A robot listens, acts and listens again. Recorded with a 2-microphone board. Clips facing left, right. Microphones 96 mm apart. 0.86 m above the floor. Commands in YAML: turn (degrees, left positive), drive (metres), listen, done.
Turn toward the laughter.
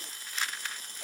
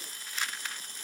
listen: true
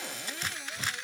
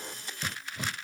listen: true
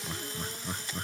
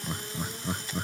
turn: -30
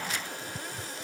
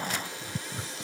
turn: -135
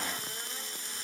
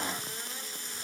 listen: true
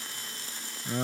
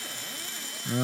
done: "Facing the laughter."